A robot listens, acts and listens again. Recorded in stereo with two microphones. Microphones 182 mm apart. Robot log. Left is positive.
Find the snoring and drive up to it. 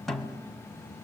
cmd idle
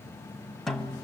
cmd idle
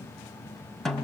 end: I can't make out snoring, only a snare drum.